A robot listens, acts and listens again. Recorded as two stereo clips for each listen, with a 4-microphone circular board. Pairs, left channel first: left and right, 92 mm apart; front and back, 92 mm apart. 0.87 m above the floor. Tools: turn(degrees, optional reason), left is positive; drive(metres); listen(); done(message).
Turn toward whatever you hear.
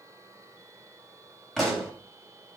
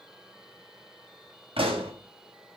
turn(degrees=175, reason="The pop: 175° left.")
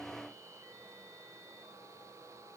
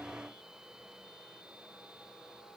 done("I heard a pop from this way, but can't make it out now.")